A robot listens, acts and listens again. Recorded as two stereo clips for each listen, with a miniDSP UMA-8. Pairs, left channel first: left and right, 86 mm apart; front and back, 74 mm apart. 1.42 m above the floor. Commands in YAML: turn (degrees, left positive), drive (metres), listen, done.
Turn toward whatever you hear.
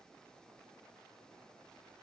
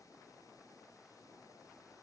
listen: true
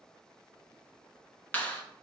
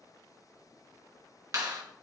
turn: 155
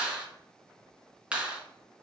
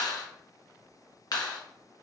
turn: -15
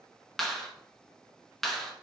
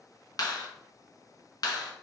done: "Found it: a clap, straight ahead."